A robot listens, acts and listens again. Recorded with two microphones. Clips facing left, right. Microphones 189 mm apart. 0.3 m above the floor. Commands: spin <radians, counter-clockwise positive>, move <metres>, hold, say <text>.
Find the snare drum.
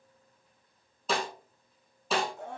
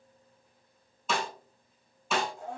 spin 0.61
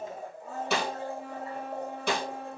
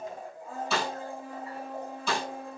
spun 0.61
spin 2.01
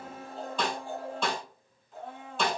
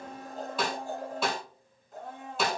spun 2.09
say Facing the snare drum, 1 to 2 m away.